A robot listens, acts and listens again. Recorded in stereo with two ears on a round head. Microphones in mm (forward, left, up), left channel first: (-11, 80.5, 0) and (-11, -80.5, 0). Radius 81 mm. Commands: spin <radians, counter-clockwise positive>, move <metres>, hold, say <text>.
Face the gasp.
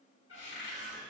hold
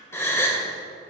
spin 0.52
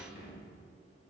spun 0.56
hold
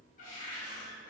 say I heard a gasp, but can't make it out now. It was about 20° right or 135° left.